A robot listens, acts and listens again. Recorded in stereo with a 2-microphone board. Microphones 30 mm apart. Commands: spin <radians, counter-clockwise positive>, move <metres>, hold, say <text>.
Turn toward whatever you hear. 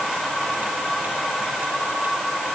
hold
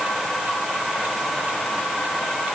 hold
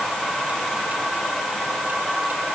say I can't make out anything.